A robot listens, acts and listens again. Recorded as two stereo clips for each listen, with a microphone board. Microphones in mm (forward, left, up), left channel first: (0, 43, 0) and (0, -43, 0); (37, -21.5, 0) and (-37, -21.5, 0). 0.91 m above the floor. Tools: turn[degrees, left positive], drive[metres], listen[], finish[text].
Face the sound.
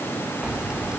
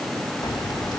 Thought: The keys jangling: 15° right.
Action: turn[-15]
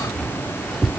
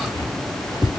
Action: finish[Facing the keys jangling.]